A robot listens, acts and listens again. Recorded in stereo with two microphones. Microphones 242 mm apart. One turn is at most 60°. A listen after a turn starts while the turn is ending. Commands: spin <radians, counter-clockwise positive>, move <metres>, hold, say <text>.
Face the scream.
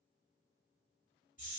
hold
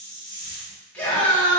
spin 0.52
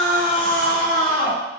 spin 1.05
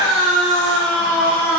spin 1.05
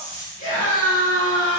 spin 0.70
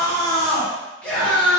say Facing the scream, 1 to 2 m away.